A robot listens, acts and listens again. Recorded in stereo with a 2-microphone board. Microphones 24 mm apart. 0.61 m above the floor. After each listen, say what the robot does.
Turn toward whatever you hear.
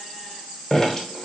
Turn 20° left.
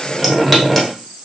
Facing the dripping.